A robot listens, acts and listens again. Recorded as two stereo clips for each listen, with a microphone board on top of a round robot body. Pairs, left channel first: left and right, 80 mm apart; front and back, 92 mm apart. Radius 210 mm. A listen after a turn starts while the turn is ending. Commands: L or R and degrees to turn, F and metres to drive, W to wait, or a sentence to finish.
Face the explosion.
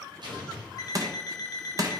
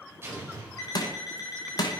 R115
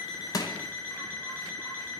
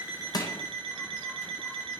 I heard an explosion from this way, but can't make it out now.